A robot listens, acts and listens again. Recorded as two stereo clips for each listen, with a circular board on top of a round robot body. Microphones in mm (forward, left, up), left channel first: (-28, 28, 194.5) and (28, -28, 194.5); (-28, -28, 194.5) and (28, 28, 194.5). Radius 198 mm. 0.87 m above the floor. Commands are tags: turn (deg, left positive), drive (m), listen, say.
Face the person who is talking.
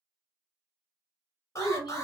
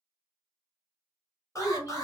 <turn deg="110"/>
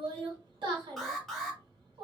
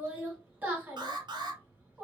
<turn deg="-25"/>
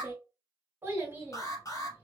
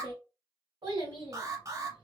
<turn deg="20"/>
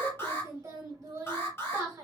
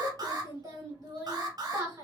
<say>Found it: a child speaking, straight ahead, 2 to 4 m away.</say>